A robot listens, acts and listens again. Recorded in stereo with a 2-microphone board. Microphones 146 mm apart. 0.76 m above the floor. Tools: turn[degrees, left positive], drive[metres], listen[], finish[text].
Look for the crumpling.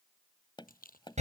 Action: turn[90]
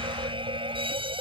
Action: listen[]
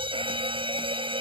Action: listen[]
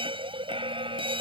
Action: finish[Facing where the crumpling came from. I can't hear it now.]